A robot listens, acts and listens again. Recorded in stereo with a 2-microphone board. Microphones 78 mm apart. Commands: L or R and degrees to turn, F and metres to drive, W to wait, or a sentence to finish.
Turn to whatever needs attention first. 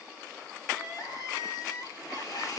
L60
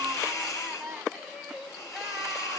Found it: crying, straight ahead, 2 to 4 m away.